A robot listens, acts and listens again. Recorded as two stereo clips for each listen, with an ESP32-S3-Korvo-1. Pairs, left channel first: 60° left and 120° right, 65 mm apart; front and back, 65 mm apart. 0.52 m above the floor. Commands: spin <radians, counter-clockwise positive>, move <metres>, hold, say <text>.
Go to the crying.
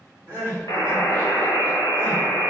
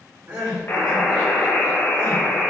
spin 2.09
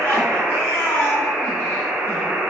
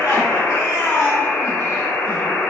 spin 0.26
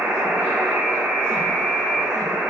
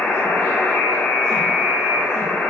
hold
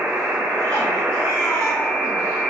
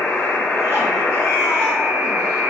hold
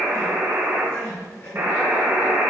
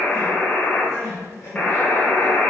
move 1.0
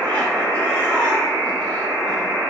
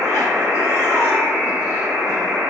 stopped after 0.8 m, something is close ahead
hold
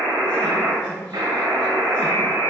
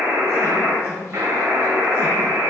hold
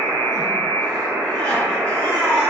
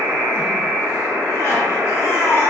say I am next to the crying.